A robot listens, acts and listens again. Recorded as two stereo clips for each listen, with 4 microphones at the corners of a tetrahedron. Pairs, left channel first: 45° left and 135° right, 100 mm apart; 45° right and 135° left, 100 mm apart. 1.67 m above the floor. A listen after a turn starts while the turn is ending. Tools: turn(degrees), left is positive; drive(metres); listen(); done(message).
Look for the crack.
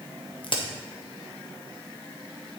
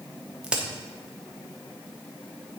turn(degrees=55)
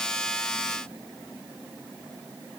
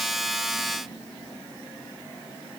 done("I heard a crack from this way, but can't make it out now.")